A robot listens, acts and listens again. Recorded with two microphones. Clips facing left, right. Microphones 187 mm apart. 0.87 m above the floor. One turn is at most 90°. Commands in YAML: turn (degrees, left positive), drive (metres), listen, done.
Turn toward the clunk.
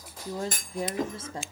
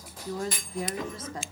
turn: 45
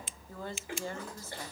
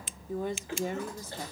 listen: true
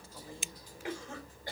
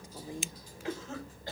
done: "I heard a clunk, but can't make it out now. It was about straight ahead or 90° left."